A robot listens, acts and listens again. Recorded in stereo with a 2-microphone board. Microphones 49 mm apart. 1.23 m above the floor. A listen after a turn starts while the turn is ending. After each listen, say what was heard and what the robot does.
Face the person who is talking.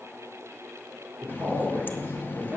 The man speaking: about 40° right or 140° right. Turn 40° right.
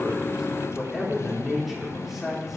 Found it: a man speaking, straight ahead, over 4 m away.